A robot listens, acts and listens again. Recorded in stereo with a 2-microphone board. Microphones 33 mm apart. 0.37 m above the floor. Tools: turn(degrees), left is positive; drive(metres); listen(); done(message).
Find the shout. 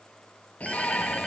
turn(degrees=50)
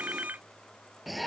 done("Found it: a shout, straight ahead.")